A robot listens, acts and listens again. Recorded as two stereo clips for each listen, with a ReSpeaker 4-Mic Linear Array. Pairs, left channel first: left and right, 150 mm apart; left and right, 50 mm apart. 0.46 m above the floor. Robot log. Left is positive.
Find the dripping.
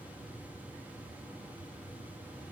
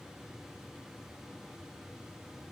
cmd idle
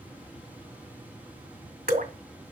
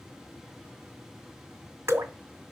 note: The dripping: about 75° right or 105° right.
cmd yaw -75
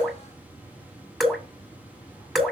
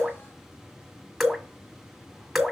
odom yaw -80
end: Facing the dripping.